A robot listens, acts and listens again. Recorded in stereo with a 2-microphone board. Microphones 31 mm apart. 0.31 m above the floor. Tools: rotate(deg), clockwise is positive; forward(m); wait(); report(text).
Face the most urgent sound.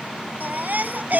rotate(60)
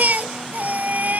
rotate(55)
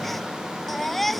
report("Facing the baby crying.")